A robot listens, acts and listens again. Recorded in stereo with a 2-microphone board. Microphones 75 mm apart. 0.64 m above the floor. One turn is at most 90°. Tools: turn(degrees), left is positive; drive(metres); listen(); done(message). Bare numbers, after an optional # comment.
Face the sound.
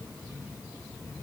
listen()
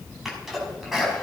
turn(-30)
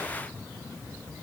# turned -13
listen()
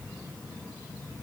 done("I heard a sneeze, but can't make it out now. It was about 10° left or 165° right.")